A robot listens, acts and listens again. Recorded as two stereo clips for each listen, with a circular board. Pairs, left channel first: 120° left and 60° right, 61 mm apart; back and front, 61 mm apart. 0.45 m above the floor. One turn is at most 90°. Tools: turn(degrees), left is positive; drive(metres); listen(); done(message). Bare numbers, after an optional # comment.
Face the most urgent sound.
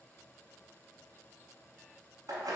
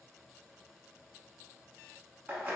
listen()
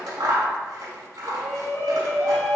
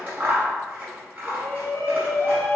# The shout: 150° left.
turn(90)
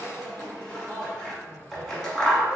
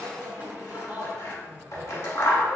# The shout is now 55° left.
turn(55)
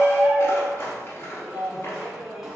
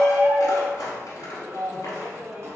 # The shout is now 20° left.
turn(20)
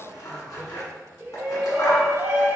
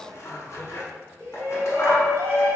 done("Facing the shout, 1 to 2 m away.")